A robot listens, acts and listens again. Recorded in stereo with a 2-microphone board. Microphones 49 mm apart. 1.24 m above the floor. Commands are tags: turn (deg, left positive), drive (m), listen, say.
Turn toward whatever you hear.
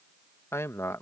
<turn deg="90"/>
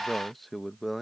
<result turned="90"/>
<say>Found it: a man speaking, straight ahead.</say>